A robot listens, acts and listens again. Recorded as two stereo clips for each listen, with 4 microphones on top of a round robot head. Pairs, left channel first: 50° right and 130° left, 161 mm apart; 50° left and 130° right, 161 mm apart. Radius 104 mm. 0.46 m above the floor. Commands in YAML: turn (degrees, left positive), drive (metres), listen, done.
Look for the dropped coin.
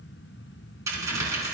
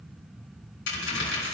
turn: 60
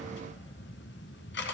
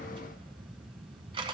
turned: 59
done: "Facing where the dropped coin came from. I can't hear it now."